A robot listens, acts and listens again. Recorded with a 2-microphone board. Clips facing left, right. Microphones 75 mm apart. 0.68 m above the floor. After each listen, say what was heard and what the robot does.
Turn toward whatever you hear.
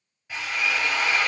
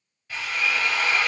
The drill: about 20° left or 160° left. Turn 20° left.
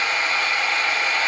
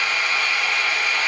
So it is at 140° left. Turn 140° left.
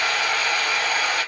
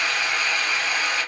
The drill is now 55° left. Turn 55° left.
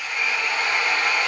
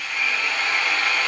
The drill is now 10° left. Turn 10° left.
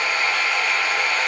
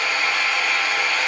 Facing the drill.